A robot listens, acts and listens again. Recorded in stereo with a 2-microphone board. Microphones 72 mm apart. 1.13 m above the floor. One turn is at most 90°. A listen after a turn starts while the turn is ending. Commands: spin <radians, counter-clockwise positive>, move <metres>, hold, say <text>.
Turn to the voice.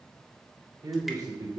spin -1.05
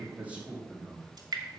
spin -0.26
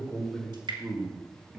spin -0.17
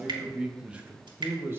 spin -0.52
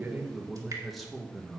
say Found it: a man speaking, straight ahead.